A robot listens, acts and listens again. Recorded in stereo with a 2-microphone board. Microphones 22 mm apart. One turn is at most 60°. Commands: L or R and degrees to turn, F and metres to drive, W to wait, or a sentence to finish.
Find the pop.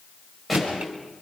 L30
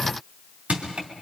W
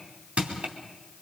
I heard a pop, but can't make it out now. It was about 30° right or 150° left.